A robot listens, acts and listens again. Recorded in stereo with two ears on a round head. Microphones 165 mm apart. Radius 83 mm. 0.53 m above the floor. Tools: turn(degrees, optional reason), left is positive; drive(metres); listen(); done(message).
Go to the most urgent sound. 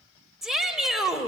turn(degrees=30)
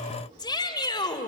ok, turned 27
turn(degrees=155, reason="So it is at 155° left.")
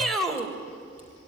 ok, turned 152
drive(metres=1.0)
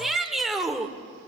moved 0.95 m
drive(metres=1.0)
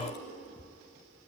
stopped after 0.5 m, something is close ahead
listen()
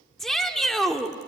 done("Arrived at the shout, straight ahead.")